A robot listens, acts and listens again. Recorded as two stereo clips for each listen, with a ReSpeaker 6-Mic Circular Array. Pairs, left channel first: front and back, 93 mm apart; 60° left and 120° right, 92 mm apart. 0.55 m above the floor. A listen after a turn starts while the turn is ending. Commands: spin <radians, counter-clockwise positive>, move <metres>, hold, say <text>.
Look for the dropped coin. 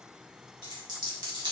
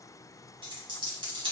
spin -2.53
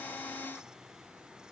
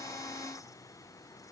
say Facing where the dropped coin came from. I can't hear it now.